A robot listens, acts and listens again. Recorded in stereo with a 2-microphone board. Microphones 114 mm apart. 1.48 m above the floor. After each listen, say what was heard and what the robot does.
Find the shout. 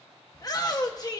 The shout: about 30° left or 150° left. Turn 30° left.
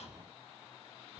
Keep listening.
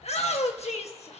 So it is at 115° left. Turn 115° left.
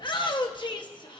The shout is now 40° left. Turn 40° left.
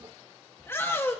The shout is now 20° left. Turn 20° left.
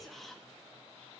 Keep listening.
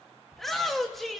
Facing the shout, 1 to 2 m away.